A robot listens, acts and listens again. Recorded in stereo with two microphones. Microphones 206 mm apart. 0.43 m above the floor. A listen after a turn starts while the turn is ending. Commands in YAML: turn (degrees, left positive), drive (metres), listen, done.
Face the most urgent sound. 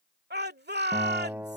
turn: -55
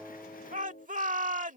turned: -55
turn: -50
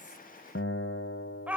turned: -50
turn: -10
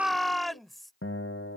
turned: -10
done: "Facing the shout."